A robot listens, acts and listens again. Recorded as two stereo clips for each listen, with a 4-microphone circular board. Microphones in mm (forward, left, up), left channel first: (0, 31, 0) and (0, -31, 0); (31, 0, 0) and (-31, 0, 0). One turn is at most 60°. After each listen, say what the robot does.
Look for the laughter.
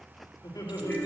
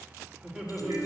Turn 60° left.
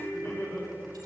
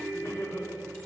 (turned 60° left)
Turn 50° left.
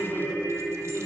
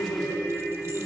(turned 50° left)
Keep listening.
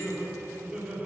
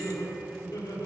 Found it: laughter, straight ahead, 2 to 4 m away.